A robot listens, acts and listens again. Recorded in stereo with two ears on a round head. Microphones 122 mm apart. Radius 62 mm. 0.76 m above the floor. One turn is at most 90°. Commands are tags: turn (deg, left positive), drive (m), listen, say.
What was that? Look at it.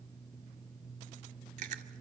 <turn deg="-60"/>
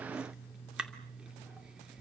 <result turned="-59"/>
<say>Found it: chewing, straight ahead.</say>